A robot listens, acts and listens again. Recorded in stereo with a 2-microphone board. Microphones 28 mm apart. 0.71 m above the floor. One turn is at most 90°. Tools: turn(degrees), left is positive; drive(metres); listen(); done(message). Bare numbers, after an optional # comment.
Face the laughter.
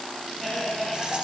turn(30)
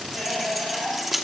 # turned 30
# So it is at 15° right.
turn(-15)
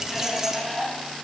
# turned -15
done("Found it: laughter, straight ahead.")